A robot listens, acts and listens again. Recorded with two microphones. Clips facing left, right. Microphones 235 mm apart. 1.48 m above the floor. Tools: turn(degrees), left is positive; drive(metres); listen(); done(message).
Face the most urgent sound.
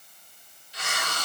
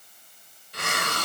listen()
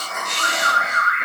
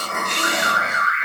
turn(degrees=65)
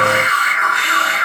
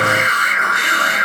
done("Facing the alarm, 2 to 4 m away.")